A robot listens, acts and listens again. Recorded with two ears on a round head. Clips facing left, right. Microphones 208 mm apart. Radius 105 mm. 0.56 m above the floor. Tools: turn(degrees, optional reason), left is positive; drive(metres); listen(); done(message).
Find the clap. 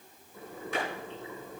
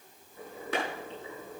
turn(degrees=-55, reason="The clap: about 55° right or 125° right.")
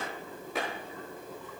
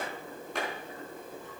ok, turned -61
done("Found it: a clap, straight ahead, over 4 m away.")